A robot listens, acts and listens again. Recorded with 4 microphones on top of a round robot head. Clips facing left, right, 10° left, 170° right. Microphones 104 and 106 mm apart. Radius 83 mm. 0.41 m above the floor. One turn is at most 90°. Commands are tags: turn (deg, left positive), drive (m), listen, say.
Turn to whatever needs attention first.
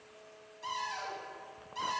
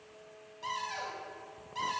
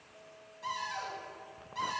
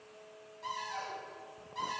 <listen/>
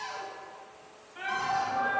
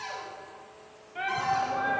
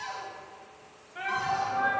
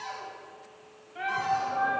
<turn deg="-90"/>
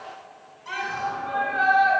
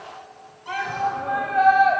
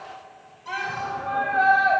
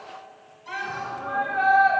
<turn deg="-50"/>
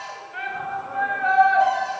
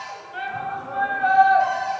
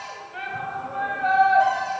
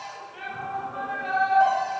<turn deg="-20"/>
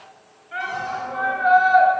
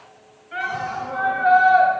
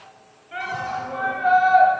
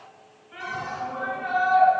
<say>Facing the shout.</say>